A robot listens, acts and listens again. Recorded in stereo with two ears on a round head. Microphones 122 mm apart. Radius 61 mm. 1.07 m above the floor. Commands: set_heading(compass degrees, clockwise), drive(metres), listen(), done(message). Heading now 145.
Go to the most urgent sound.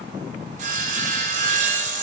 listen()
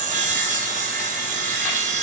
listen()
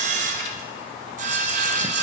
done("I can't make out anything urgent, only sawing.")